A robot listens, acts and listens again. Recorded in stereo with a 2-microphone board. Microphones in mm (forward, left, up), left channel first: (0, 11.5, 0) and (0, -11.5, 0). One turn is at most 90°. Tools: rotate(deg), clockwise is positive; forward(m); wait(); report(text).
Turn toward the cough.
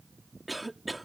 rotate(30)
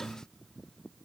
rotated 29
wait()
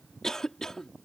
rotate(-25)
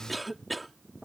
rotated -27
report("Facing the cough.")